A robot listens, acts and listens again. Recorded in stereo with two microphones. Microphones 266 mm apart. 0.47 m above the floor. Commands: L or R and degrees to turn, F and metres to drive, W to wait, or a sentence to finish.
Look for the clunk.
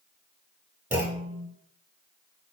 R30
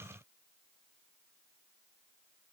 W
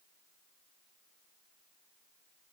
I heard a clunk, but can't make it out now. It was about 20° left or 140° right.